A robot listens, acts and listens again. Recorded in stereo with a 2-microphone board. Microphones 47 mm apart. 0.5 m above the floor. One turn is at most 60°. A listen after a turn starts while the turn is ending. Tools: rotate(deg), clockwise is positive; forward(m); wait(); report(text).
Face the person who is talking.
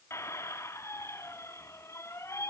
wait()
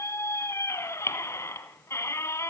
wait()
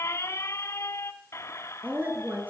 rotate(45)
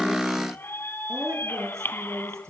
rotate(60)
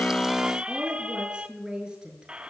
rotate(15)
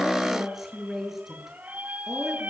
report("Facing the woman speaking, over 4 m away.")